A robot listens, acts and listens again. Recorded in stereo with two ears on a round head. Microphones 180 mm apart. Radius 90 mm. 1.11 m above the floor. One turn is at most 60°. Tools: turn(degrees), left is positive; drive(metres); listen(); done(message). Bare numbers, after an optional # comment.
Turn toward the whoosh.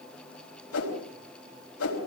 turn(60)
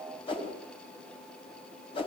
# So it is at 25° left.
turn(25)
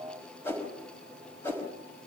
# The whoosh is now 10° left.
turn(10)
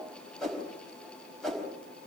done("Facing the whoosh.")